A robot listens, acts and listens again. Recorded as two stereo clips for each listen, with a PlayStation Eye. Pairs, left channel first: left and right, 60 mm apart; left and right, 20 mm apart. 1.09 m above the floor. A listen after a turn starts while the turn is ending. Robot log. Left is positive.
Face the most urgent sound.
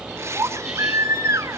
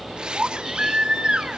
note: The baby crying: about 60° right or 120° right.
cmd yaw -60
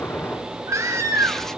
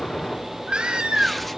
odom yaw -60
note: So it is at 60° right.
cmd yaw -60
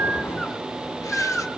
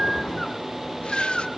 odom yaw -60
end: Found it: a baby crying, straight ahead.